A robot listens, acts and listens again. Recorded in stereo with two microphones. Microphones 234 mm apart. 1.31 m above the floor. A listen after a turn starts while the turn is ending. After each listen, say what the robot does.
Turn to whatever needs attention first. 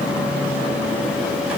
Keep listening.
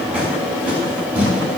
Keep listening.
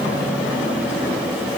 I can't make out anything urgent to turn to.